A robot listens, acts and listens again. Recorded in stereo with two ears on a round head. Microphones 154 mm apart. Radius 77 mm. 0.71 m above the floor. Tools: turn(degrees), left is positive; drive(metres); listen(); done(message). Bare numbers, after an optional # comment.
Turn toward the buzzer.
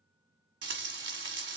listen()
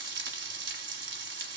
listen()
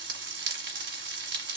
done("I can't make out a buzzer to turn to.")